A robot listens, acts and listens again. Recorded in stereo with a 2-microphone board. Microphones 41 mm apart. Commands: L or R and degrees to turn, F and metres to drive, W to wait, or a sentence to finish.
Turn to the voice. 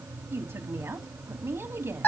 R90
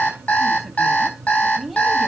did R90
Facing the woman speaking.